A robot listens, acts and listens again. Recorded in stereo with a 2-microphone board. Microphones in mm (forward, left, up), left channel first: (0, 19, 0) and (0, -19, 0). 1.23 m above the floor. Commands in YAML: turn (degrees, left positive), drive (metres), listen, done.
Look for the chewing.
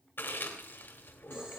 turn: 60
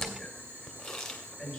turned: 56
turn: 10
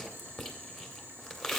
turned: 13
done: "Found it: chewing, straight ahead, 1 to 2 m away."